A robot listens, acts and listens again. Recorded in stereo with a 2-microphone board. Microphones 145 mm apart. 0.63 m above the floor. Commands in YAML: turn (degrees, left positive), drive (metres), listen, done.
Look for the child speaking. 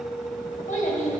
turn: 60
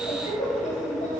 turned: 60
turn: 55
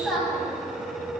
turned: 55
done: "Facing the child speaking."